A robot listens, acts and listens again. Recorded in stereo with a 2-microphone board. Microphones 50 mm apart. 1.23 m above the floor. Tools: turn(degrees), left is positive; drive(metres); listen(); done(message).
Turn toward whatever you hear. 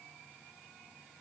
listen()
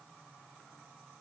listen()
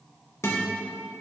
turn(degrees=60)
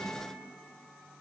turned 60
listen()
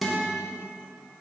done("Found it: a guitar, straight ahead, 1 to 2 m away.")